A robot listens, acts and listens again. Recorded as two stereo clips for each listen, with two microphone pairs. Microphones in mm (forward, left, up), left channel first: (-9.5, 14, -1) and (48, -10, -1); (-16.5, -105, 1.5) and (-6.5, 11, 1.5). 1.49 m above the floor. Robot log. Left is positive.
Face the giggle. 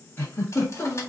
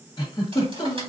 note: The giggle: 145° right.
cmd yaw -145
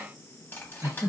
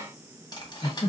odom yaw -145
note: The giggle is now 50° right.
cmd yaw -50
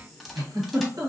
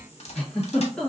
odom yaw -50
note: The giggle is now 15° right.
cmd yaw -15
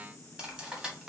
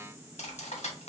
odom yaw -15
cmd idle
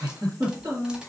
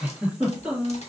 end: Found it: a giggle, straight ahead.